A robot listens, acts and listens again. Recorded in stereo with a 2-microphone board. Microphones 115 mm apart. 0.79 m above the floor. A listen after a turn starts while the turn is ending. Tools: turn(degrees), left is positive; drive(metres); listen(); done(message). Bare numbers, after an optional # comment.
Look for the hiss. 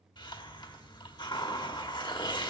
# The hiss: about 40° left or 140° left.
turn(40)
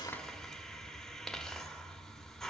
done("Found it: a hiss, straight ahead.")